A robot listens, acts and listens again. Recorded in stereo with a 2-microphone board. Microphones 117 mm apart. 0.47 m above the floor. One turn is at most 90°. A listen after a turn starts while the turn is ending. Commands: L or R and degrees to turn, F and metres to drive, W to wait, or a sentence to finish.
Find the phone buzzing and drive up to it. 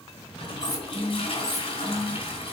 R55
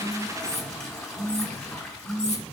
R75
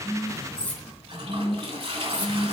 F1.0
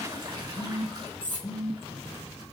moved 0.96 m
F1.0
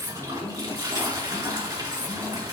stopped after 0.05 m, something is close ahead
W
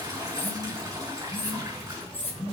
I am next to the phone buzzing.